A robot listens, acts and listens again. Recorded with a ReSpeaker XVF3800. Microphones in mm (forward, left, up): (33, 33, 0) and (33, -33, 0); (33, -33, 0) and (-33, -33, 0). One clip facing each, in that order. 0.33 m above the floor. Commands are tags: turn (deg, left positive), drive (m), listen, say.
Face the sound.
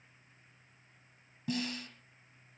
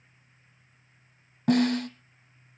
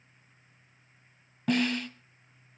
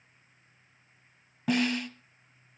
<turn deg="-95"/>
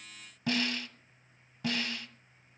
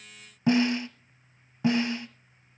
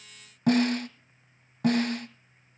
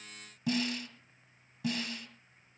<turn deg="-25"/>
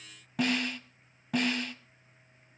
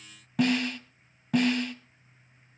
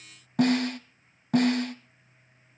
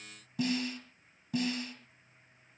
<say>Found it: a snare drum, straight ahead.</say>